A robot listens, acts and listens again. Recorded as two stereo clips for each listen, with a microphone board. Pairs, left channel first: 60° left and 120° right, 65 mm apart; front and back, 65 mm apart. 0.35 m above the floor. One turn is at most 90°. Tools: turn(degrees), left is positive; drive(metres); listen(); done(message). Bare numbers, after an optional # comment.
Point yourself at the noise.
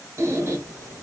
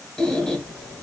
# The squeak: 75° right.
turn(-75)
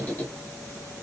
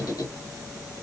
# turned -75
done("Found it: a squeak, straight ahead, under 1 m away.")